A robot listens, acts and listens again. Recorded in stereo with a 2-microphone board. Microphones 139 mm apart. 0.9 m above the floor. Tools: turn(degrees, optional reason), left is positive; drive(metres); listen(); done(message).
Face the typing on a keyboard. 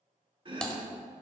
turn(degrees=30)
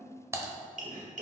turn(degrees=-20, reason="So it is at 20° right.")
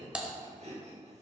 done("Found it: typing on a keyboard, straight ahead, 1 to 2 m away.")